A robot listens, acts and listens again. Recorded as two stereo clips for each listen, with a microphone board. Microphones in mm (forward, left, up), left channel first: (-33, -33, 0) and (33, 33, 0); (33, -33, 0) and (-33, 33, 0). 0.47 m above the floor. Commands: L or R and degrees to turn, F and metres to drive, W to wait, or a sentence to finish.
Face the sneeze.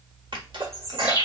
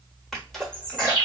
L40
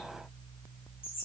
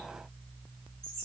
Facing where the sneeze came from. I can't hear it now.